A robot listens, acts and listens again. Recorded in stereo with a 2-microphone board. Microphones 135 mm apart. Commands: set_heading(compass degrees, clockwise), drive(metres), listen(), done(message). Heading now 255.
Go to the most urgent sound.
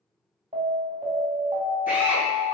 set_heading(325)
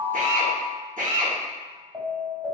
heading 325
set_heading(0)
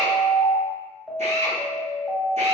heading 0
drive(1.0)
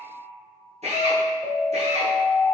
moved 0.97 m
drive(1.0)
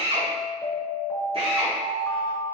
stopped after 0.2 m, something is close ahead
set_heading(350)
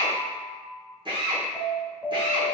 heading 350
done("I am next to the alarm.")